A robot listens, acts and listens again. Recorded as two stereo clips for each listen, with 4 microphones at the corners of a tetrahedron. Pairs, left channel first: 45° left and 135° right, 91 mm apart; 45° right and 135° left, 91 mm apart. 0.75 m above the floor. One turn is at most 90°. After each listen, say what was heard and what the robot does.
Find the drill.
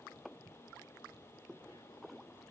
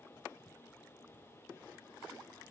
Keep listening.
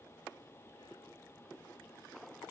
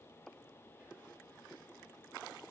Keep listening.
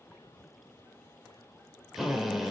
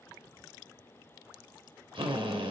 The drill: 135° left. Turn 90° left.
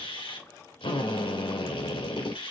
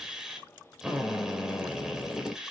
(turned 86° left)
The drill is now 50° left. Turn 50° left.
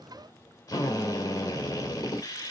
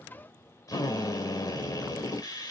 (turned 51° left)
Found it: a drill, straight ahead.